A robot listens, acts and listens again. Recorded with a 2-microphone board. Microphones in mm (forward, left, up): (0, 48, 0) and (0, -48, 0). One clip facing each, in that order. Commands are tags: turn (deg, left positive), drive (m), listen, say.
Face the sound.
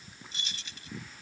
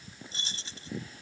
<turn deg="-35"/>
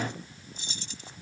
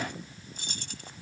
<turn deg="-120"/>
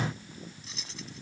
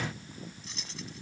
<say>Facing the keys jangling.</say>